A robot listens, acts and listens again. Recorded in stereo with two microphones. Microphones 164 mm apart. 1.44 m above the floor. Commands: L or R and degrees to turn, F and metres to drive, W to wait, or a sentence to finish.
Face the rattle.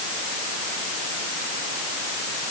W
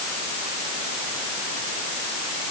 W
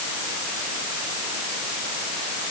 I can't make out a rattle.